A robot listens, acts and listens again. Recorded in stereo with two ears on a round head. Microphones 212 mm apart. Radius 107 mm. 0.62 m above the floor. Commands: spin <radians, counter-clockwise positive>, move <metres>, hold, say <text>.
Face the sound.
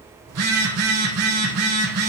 spin -1.13
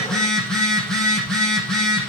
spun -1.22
say Facing the phone buzzing, over 4 m away.